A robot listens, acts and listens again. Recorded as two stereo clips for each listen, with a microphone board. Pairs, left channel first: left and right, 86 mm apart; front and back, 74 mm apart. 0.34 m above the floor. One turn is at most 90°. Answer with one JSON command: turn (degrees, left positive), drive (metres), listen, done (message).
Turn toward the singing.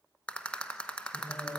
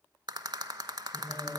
{"turn": 90}
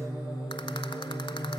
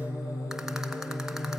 {"turn": 45}
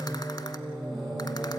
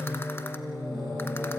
{"done": "Facing the singing, over 4 m away."}